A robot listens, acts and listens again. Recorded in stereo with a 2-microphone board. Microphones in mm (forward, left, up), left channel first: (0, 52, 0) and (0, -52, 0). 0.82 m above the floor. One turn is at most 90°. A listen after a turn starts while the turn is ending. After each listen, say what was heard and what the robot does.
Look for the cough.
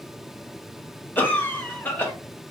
The cough: about 15° left or 165° left. Turn 15° left.
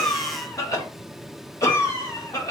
So it is at 150° left. Turn 90° left.
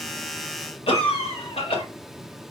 The cough is now 75° left. Turn 75° left.
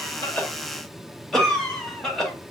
Facing the cough, 1 to 2 m away.